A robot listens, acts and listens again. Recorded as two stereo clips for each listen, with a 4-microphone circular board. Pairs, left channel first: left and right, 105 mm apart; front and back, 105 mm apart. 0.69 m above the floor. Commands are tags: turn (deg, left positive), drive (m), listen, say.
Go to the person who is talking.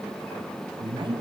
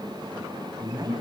<turn deg="-130"/>
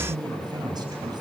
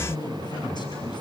<turn deg="-45"/>
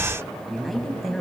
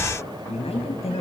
<drive m="1.0"/>
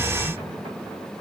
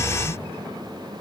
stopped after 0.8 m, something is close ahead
<listen/>
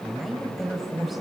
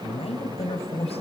<say>Something is in my way. I am facing the man speaking but have not reached it.</say>